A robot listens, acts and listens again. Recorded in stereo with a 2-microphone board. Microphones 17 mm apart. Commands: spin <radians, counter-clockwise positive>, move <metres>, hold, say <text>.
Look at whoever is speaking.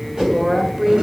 spin -0.35
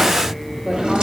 hold
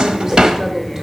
hold
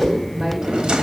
say I heard a woman speaking, but can't make it out now. It was about straight ahead or 140° right.